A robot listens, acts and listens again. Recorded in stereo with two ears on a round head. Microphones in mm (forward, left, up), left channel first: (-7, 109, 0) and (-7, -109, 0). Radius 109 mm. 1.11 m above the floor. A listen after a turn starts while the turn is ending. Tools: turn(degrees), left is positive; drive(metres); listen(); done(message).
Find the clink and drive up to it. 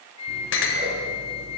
turn(degrees=50)
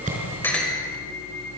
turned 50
drive(metres=1.0)
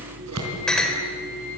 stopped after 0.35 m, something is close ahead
done("Blocked. The clink is further on, straight ahead.")